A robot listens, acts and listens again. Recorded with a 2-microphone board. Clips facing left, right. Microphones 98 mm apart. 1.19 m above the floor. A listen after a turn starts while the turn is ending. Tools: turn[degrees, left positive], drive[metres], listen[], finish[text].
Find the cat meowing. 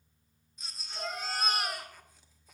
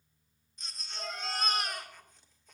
Thought: The cat meowing: about 75° left or 105° left.
Action: turn[75]
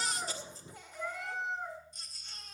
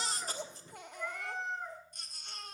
Action: finish[Facing the cat meowing.]